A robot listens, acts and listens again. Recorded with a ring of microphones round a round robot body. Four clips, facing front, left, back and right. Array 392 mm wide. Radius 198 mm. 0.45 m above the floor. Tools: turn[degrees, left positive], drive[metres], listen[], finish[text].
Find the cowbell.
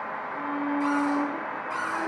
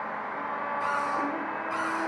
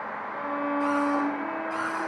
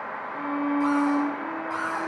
Action: listen[]
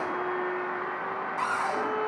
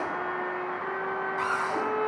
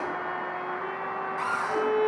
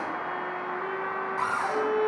Action: listen[]
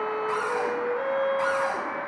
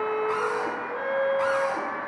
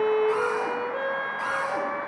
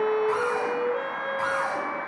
Action: finish[I can't make out a cowbell to turn to.]